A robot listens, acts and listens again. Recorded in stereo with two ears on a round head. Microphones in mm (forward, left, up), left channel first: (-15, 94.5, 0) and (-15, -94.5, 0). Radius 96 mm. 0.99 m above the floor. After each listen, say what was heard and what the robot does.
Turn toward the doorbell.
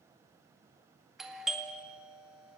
Turn 30° left.
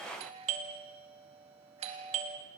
So it is at 35° right. Turn 35° right.
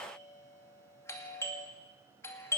The doorbell is now 15° left. Turn 15° left.
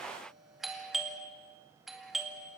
Facing the doorbell, 2 to 4 m away.